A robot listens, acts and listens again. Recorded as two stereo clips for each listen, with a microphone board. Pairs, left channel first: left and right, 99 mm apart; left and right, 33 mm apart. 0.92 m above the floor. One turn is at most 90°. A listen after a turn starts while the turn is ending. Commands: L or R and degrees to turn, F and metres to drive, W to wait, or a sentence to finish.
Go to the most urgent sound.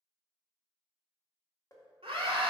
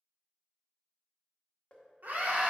R90
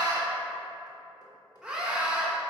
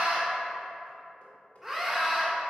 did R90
F1.0
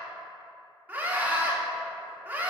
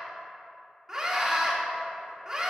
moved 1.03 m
R15
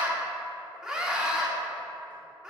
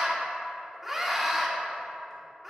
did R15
F1.0
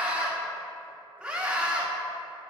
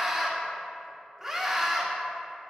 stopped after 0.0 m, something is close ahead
R10
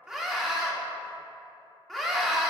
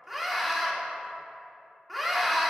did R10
Arrived at the scream, straight ahead.